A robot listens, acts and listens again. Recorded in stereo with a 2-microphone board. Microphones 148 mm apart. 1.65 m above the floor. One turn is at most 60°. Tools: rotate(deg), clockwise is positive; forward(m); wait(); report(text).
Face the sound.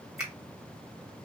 rotate(30)
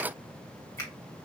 wait()
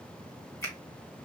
rotate(-20)
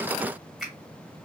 report("Found it: a finger snap, straight ahead.")